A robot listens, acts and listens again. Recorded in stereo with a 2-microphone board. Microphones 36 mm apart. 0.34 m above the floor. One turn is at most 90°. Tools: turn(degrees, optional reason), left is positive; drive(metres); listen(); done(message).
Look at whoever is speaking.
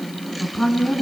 turn(degrees=15, reason="The woman speaking: about 15° left or 165° left.")
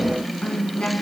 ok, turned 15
turn(degrees=90, reason="So it is at 150° left.")
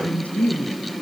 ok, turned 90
turn(degrees=50, reason="The woman speaking is now 50° left.")
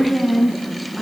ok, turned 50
done("Facing the woman speaking, 2 to 4 m away.")